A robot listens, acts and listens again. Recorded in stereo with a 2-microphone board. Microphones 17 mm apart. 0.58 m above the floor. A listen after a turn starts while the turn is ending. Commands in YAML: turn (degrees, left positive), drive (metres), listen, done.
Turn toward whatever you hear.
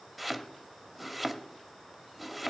turn: -30
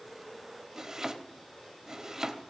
turn: -145
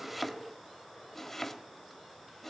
turn: 20
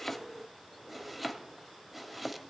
done: "Found it: chopping, straight ahead, 1 to 2 m away."